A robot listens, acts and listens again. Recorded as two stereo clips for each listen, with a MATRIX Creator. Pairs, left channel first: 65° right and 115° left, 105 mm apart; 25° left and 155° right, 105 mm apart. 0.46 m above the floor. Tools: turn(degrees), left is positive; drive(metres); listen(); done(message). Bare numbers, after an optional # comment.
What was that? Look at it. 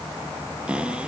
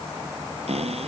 # The cupboard door: 170° right.
turn(-170)
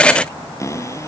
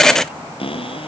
done("Found it: a cupboard door, straight ahead.")